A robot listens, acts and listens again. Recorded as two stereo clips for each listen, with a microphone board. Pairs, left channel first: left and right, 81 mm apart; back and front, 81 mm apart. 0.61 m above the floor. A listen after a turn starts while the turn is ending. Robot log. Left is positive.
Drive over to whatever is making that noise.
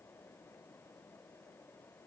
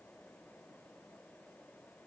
cmd idle
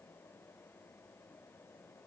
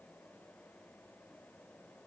cmd idle
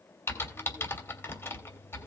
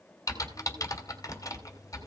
note: The typing on a keyboard: 145° left.
cmd yaw +145
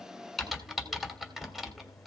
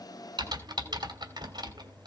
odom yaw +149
cmd fwd 1.0
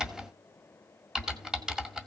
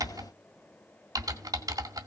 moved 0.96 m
note: The typing on a keyboard is now 10° right.
cmd yaw -10
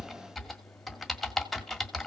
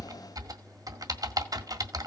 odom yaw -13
cmd fwd 1.0
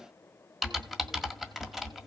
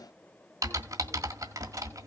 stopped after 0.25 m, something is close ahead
end: I am next to the typing on a keyboard.